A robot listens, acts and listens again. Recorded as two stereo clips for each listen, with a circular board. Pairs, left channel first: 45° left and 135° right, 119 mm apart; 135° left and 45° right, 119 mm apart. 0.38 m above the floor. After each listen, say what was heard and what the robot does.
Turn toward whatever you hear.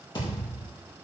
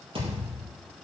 Found it: a thud, straight ahead, over 4 m away.